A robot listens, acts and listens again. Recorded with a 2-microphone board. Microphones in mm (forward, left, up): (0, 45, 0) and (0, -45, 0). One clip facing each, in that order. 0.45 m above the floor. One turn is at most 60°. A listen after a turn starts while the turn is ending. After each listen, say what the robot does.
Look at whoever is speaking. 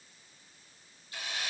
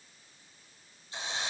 Keep listening.
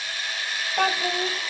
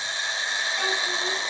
Turn 55° left.
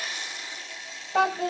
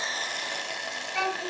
Turn 60° left.
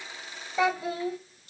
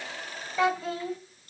Turn 15° left.
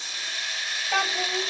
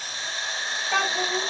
Facing the child speaking, 2 to 4 m away.